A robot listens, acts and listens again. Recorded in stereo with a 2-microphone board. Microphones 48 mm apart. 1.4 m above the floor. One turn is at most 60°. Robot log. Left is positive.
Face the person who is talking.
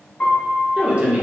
note: The woman speaking: about 25° right or 155° right.
cmd yaw -25
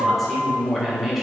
end: Found it: a woman speaking, straight ahead.